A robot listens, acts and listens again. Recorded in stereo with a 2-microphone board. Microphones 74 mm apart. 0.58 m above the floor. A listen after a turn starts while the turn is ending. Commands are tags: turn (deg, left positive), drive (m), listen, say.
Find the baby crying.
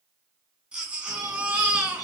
<turn deg="-30"/>
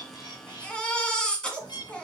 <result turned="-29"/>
<turn deg="15"/>
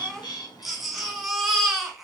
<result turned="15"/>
<say>Facing the baby crying, 1 to 2 m away.</say>